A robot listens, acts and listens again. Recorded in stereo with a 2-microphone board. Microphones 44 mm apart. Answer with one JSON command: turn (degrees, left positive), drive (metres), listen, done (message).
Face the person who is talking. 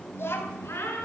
{"turn": 65}
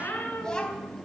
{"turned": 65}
{"turn": 20}
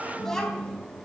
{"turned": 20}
{"turn": 15}
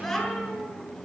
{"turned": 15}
{"done": "Facing the child speaking, over 4 m away."}